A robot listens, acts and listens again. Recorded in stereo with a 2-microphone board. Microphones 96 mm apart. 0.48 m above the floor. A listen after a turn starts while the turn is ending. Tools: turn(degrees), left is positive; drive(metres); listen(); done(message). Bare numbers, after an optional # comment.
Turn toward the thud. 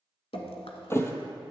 # The thud: about 25° left or 155° left.
turn(25)
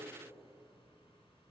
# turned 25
listen()
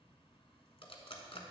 done("I heard a thud, but can't make it out now. It was about straight ahead or 130° left.")